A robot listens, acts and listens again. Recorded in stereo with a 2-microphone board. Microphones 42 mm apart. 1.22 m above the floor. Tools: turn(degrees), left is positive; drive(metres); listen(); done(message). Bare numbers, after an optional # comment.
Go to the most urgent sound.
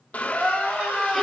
# The crying: about 25° right or 155° right.
turn(-25)
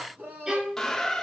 # So it is at 130° right.
turn(-130)
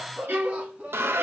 # The crying is now 30° right.
turn(-30)
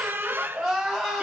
drive(1.0)
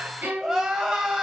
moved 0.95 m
# The crying is now 10° right.
turn(-10)
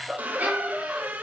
drive(1.0)
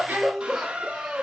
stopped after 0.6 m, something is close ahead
# The crying is now 10° right.
turn(-10)
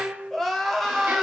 done("Arrived at the crying, straight ahead.")